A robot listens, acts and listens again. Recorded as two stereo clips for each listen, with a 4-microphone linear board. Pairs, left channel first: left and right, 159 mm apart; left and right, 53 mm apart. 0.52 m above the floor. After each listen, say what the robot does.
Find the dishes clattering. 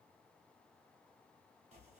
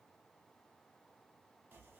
Keep listening.
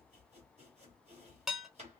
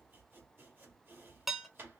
Turn 30° left.
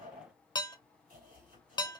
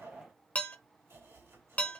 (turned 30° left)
Turn 150° left.
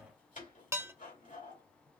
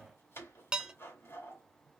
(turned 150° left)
Turn 20° right.
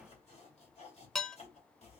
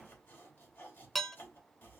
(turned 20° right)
Facing the dishes clattering.